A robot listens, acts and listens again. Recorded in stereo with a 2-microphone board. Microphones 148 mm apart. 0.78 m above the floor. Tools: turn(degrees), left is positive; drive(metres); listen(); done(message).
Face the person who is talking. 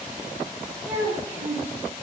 turn(degrees=-30)
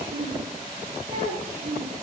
turn(degrees=-135)
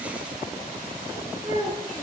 turn(degrees=-25)
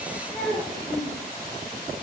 done("Facing the child speaking.")